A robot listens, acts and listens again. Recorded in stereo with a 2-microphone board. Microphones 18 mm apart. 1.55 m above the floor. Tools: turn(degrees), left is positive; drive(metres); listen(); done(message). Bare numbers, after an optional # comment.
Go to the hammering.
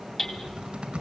# The hammering: about 30° left or 150° left.
turn(30)
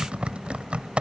listen()
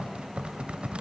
listen()
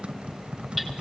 done("I heard hammering, but can't make it out now. It was about straight ahead or 120° left. I did not reach it.")